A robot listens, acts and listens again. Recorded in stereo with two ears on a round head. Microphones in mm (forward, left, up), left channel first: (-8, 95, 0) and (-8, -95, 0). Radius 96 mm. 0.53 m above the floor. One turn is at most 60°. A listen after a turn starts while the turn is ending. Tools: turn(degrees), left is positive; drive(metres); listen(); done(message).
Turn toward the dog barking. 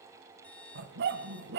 turn(degrees=-55)
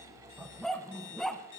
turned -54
done("Facing the dog barking, 1 to 2 m away.")